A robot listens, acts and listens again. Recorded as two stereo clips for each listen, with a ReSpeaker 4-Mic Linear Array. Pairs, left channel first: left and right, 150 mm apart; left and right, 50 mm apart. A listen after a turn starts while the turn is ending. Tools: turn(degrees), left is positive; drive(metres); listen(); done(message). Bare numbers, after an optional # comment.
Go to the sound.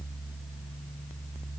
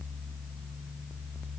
listen()
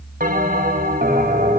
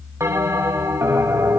# The bell: about 60° right or 120° right.
turn(-60)
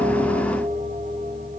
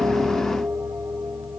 listen()
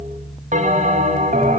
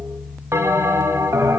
# So it is at 55° right.
turn(-55)
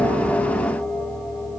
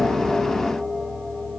listen()
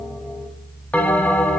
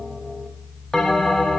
# The bell is now 10° left.
turn(10)
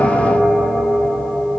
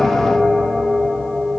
drive(1.0)
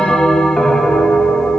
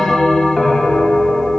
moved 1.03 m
drive(1.0)
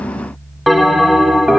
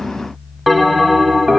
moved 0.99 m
drive(1.0)
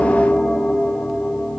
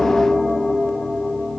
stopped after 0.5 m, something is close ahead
done("I am next to the bell.")